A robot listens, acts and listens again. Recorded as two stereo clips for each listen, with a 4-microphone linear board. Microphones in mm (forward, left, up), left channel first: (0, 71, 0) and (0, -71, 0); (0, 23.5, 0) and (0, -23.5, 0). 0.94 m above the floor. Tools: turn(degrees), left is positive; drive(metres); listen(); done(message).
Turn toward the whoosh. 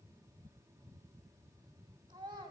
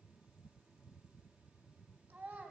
listen()
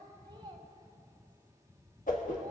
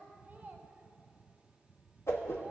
turn(degrees=70)
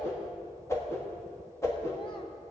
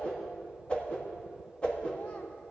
turn(degrees=20)
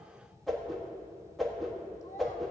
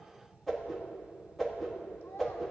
done("Found it: a whoosh, straight ahead, 1 to 2 m away.")